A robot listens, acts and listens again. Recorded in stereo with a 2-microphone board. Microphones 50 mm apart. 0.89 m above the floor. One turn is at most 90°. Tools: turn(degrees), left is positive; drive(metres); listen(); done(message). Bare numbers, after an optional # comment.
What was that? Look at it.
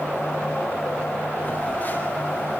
# The phone buzzing: about 40° left or 140° left.
turn(40)
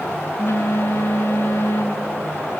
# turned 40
# So it is at 100° left.
turn(90)
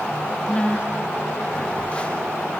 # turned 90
# The phone buzzing is now 30° left.
turn(30)
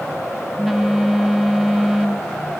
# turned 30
done("Found it: a phone buzzing, straight ahead, 1 to 2 m away.")